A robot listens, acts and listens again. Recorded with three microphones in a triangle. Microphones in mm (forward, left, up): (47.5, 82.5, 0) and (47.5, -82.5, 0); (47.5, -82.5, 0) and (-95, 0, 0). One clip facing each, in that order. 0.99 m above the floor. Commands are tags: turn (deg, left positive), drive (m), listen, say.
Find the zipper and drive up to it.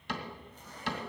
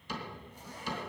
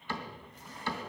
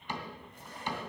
<turn deg="-170"/>
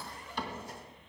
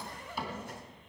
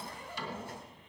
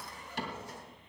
<turn deg="-60"/>
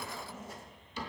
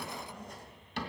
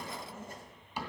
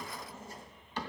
<drive m="1.0"/>
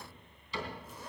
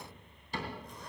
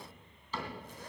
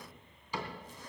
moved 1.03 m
<drive m="1.0"/>
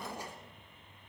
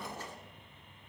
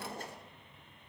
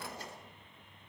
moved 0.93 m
<turn deg="10"/>
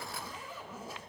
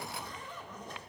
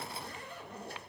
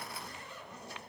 <drive m="1.0"/>
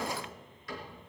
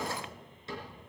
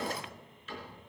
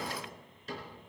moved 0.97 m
<listen/>
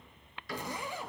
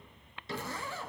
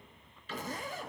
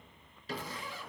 <turn deg="15"/>
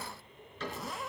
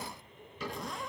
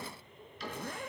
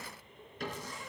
<drive m="1.0"/>
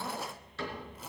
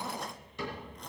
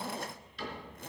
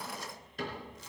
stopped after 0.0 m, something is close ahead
<say>I am next to the zipper.</say>